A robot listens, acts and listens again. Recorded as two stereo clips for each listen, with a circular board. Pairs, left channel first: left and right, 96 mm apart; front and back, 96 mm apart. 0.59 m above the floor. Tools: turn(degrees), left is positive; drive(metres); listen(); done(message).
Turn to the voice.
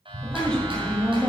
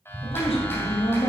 turn(degrees=15)
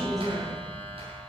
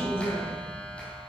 done("Facing the woman speaking, 2 to 4 m away.")